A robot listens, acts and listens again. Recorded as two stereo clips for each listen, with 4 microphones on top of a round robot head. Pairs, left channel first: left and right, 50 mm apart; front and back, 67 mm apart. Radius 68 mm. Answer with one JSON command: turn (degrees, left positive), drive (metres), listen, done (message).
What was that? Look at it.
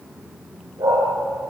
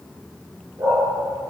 {"turn": -120}
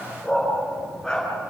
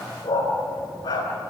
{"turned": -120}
{"turn": 10}
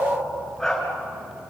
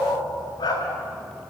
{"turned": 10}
{"turn": 10}
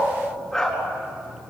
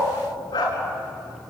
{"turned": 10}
{"turn": 10}
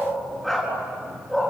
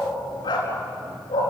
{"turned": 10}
{"done": "Found it: a dog barking, straight ahead."}